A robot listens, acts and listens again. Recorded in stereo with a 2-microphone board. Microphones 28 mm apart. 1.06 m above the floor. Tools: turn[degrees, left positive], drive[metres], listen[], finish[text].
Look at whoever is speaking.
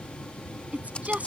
Thought: The woman speaking: about 55° right or 125° right.
Action: turn[-55]
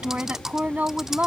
Thought: So it is at 75° right.
Action: turn[-75]
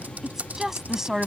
Thought: The woman speaking is now 20° right.
Action: turn[-20]
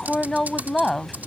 Action: finish[Found it: a woman speaking, straight ahead.]